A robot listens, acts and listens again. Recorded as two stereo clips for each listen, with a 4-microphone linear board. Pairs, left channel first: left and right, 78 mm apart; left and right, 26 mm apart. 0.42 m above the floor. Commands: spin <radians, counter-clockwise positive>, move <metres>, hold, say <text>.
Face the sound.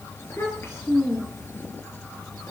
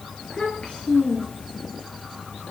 spin 0.61
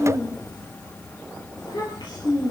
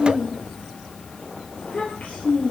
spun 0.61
spin 1.92
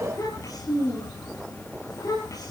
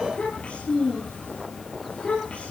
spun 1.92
spin 0.79
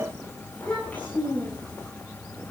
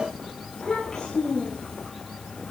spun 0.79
spin 0.35
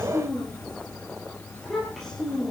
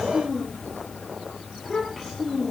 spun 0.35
say Found it: a child speaking, straight ahead.